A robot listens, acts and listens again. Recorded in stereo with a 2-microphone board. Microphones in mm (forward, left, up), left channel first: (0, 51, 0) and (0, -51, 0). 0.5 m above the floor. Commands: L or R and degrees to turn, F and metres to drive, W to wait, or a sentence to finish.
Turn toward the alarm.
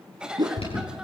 L70
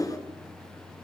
W
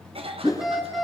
Facing the alarm, over 4 m away.